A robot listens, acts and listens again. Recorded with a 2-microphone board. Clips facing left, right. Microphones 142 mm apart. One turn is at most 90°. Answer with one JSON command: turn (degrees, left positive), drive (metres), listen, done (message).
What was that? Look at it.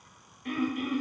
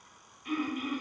{"turn": 65}
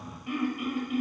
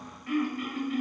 {"turn": 20}
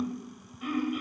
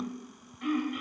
{"done": "Found it: throat clearing, straight ahead, 1 to 2 m away."}